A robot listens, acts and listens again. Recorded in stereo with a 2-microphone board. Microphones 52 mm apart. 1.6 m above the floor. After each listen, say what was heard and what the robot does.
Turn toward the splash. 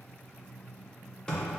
Keep listening.
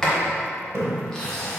The splash: about 65° right or 115° right. Turn 65° right.
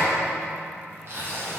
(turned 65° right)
Keep listening.
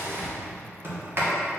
I heard a splash, but can't make it out now. It was about straight ahead or 50° right.